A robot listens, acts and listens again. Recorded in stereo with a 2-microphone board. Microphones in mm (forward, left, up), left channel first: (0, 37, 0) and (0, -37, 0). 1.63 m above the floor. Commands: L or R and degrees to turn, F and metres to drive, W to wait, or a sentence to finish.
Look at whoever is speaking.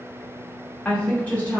L20
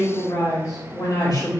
L125
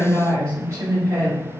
R40
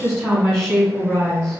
L20
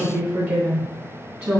R10
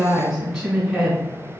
Found it: a woman speaking, straight ahead, 2 to 4 m away.